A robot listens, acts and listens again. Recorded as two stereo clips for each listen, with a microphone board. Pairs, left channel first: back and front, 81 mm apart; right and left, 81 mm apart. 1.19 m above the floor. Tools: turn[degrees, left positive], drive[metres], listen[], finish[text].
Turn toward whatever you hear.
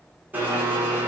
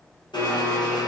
Thought: The blender: 65° right.
Action: turn[-65]
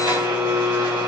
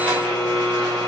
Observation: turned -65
Thought: The blender is now 15° right.
Action: turn[-15]
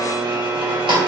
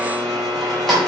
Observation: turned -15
Action: finish[Facing the blender.]